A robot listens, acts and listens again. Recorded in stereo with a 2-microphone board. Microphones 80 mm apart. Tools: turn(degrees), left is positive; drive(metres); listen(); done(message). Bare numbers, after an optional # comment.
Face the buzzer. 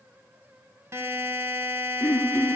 # The buzzer: about 35° right or 145° right.
turn(-35)
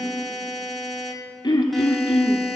done("Facing the buzzer, 1 to 2 m away.")